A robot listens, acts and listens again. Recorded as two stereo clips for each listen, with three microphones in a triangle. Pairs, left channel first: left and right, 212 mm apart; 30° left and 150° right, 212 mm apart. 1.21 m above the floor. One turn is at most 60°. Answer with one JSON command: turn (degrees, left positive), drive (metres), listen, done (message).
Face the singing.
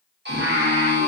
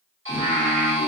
{"turn": -60}
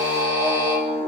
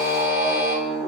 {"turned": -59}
{"turn": -50}
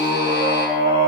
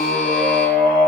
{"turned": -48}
{"turn": -30}
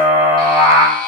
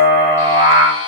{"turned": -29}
{"turn": -15}
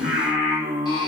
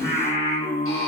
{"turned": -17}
{"turn": -20}
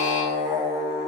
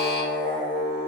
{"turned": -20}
{"done": "Facing the singing, 1 to 2 m away."}